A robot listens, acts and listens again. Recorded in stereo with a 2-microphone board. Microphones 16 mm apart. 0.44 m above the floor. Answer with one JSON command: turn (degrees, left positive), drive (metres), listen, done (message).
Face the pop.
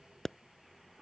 {"turn": 25}
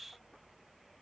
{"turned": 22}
{"listen": true}
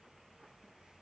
{"done": "I heard a pop, but can't make it out now. It was about straight ahead or 135° left."}